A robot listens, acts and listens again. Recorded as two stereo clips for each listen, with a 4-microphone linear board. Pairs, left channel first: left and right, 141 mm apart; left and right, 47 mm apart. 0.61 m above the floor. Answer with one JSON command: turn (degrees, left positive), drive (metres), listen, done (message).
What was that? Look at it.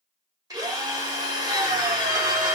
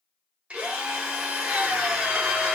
{"turn": -25}
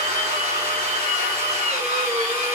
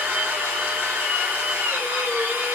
{"turn": -125}
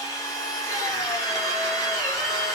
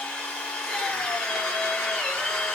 {"turn": 25}
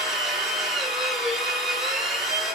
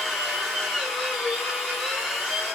{"done": "Found it: a drill, straight ahead, under 1 m away."}